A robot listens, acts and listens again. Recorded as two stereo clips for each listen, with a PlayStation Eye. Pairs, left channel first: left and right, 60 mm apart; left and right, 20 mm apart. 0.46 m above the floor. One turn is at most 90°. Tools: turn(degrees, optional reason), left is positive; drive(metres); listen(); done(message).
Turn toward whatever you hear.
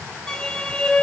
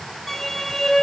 turn(degrees=30)
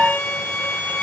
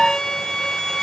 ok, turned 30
turn(degrees=90, reason="So it is at 135° left.")
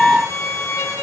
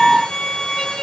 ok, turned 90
turn(degrees=85, reason="The violin is now 85° left.")
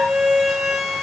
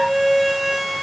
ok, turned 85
done("Facing the violin, 2 to 4 m away.")